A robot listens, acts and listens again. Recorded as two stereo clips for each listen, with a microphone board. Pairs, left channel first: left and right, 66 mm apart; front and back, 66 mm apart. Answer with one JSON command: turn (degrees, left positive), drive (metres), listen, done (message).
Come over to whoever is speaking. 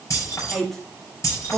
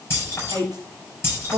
{"turn": 175}
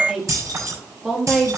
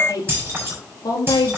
{"drive": 1.0}
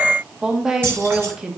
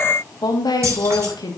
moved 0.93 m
{"turn": -10}
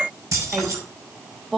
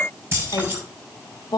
{"drive": 1.0}
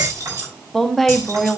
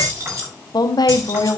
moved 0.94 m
{"drive": 1.0}
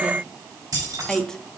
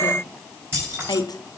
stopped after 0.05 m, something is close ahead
{"turn": 10}
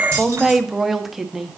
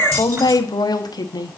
{"done": "I am next to the woman speaking."}